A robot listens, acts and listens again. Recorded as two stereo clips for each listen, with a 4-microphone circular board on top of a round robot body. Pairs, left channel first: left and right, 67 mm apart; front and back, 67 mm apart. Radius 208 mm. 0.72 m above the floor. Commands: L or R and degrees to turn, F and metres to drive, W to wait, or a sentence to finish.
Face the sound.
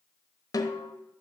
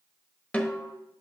L70
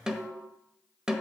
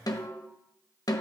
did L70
R10
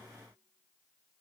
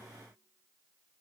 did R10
W
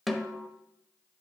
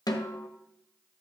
Found it: a snare drum, straight ahead.